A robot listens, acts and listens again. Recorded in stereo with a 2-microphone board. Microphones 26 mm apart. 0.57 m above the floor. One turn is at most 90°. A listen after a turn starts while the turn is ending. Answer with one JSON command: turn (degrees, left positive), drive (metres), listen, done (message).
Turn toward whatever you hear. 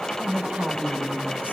{"turn": -70}
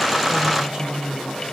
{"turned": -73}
{"turn": -35}
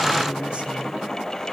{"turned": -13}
{"turn": -20}
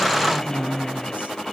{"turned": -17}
{"turn": -55}
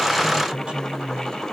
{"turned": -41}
{"turn": -35}
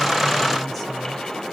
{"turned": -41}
{"listen": true}
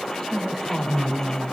{"done": "Found it: a woman speaking, straight ahead."}